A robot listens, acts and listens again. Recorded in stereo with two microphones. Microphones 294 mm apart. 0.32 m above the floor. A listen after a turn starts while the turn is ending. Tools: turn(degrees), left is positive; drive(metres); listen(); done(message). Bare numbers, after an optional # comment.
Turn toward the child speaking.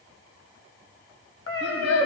# The child speaking: about 55° left or 125° left.
turn(55)
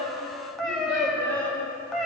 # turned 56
done("Found it: a child speaking, straight ahead.")